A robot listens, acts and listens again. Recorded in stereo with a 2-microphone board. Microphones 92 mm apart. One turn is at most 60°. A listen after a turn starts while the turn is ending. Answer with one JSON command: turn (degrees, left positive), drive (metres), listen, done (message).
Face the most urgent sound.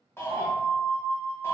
{"turn": 25}
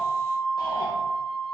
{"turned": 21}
{"turn": 60}
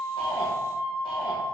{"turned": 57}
{"turn": 60}
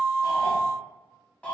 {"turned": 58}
{"turn": 15}
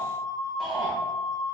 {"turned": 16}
{"done": "Facing the shout."}